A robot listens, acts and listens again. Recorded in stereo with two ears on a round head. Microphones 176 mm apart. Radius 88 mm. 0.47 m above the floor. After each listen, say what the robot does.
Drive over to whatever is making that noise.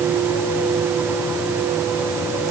Keep listening.
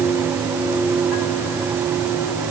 Keep listening.
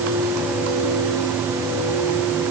I can't make out anything to turn to.